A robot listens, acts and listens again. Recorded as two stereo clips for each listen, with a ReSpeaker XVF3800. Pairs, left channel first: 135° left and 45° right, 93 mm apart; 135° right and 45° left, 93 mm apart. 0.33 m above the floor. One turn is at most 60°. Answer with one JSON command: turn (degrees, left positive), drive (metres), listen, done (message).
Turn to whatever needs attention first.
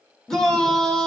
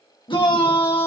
{"turn": -60}
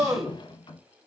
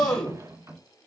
{"turn": -60}
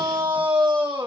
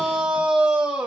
{"turn": -35}
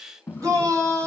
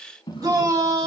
{"done": "Facing the shout, 1 to 2 m away."}